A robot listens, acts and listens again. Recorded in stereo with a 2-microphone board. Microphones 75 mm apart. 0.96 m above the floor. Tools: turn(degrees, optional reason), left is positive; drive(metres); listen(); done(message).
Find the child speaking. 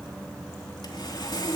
listen()
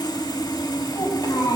turn(degrees=45, reason="The child speaking: about 45° left or 135° left.")
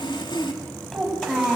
done("Found it: a child speaking, straight ahead, over 4 m away.")